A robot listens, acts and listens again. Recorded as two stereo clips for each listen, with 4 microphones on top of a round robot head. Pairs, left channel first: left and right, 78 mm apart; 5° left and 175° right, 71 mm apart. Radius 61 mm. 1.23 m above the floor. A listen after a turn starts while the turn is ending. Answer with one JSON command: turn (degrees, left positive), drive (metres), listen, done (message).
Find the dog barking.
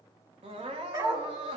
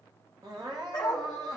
{"turn": -55}
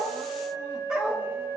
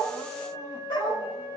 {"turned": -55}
{"turn": -15}
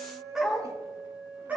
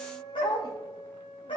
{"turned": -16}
{"turn": -25}
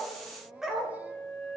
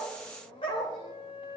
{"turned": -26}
{"turn": -10}
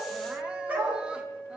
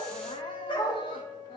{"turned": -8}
{"turn": -20}
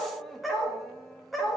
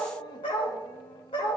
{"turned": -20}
{"done": "Found it: a dog barking, straight ahead."}